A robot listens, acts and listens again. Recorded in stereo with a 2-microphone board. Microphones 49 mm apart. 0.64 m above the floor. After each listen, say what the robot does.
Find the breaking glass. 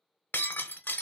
Turn 50° left.
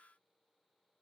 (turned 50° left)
Keep listening.
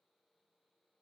I heard breaking glass, but can't make it out now. It was about straight ahead or 80° left.